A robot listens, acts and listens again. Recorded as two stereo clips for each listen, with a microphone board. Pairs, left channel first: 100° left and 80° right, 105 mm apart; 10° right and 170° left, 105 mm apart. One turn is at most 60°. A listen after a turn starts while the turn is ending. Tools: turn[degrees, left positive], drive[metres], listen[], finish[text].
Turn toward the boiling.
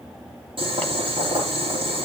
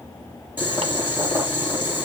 Thought: The boiling: 120° right.
Action: turn[-60]
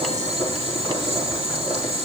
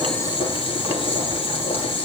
Thought: The boiling is now 55° right.
Action: turn[-55]
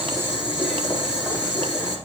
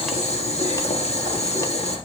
Action: finish[Facing the boiling, over 4 m away.]